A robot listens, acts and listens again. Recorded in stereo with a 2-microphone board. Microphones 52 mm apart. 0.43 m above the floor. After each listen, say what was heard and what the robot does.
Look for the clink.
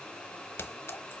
The clink: about 50° left or 130° left. Turn 50° left.
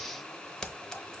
So it is at 10° left. Turn 10° left.
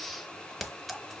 Found it: a clink, straight ahead, under 1 m away.